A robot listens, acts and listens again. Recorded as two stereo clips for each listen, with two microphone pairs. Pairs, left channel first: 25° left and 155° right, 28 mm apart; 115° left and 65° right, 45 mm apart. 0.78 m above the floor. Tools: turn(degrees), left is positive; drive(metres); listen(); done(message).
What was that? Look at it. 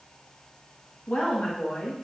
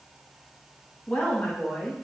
turn(degrees=65)
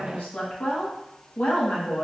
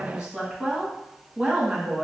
done("Found it: a woman speaking, straight ahead, 1 to 2 m away.")